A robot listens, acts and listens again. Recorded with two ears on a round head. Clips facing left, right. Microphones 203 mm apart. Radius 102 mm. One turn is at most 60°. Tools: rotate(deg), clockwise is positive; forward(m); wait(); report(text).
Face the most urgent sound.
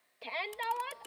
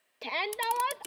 rotate(60)
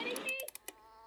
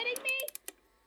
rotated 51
rotate(60)
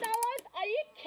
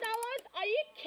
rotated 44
rotate(15)
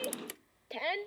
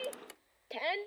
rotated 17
report("Found it: a shout, straight ahead.")